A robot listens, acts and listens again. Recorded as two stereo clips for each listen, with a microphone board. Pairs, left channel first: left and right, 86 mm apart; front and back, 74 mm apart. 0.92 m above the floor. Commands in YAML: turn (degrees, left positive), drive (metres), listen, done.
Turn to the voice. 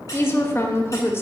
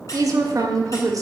turn: 150
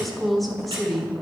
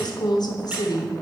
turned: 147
done: "Facing the woman speaking."